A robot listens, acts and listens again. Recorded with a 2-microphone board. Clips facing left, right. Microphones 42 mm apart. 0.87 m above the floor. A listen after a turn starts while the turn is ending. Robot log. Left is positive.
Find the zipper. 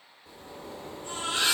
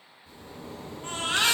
note: The zipper: about 60° left or 120° left.
cmd yaw +60
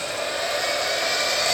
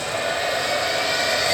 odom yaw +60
cmd idle
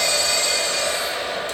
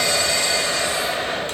cmd idle
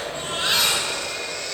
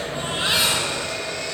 end: I heard a zipper, but can't make it out now. It was about straight ahead or 60° left.